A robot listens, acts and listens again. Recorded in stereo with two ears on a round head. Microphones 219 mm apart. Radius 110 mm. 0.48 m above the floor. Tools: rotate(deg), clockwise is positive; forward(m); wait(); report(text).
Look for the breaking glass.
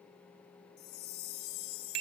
wait()
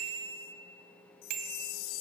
wait()
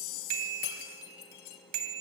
rotate(-90)
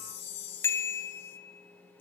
report("Facing where the breaking glass came from. I can't hear it now.")